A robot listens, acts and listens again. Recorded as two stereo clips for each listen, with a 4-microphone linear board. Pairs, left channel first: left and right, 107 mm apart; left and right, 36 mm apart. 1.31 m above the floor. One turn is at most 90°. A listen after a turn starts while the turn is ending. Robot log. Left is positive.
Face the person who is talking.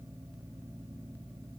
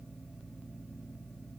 cmd idle
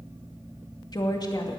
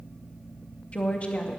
note: The woman speaking: about 40° left or 140° left.
cmd yaw +40
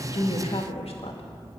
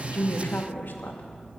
note: So it is at 95° left.
cmd yaw +90
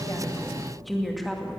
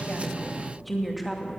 end: Found it: a woman speaking, straight ahead, 2 to 4 m away.